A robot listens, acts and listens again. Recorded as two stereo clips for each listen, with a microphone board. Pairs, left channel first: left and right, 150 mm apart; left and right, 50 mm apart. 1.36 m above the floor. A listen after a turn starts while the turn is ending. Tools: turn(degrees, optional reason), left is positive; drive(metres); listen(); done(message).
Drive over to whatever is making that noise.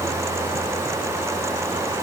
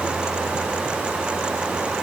listen()
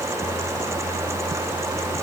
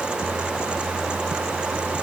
listen()
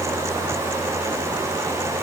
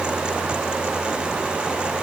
done("I can't make out anything.")